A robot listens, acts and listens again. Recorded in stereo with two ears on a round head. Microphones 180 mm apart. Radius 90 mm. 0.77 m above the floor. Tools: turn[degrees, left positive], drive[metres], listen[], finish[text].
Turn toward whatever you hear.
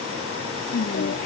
Thought: The singing: about 45° left or 135° left.
Action: turn[45]
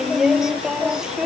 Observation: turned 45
Action: finish[Facing the singing.]